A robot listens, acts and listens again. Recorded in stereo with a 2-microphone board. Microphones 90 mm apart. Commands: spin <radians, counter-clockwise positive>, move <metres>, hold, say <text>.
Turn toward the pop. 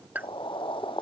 spin -0.35
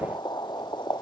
hold
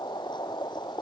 say I heard a pop, but can't make it out now. It was about straight ahead or 140° right.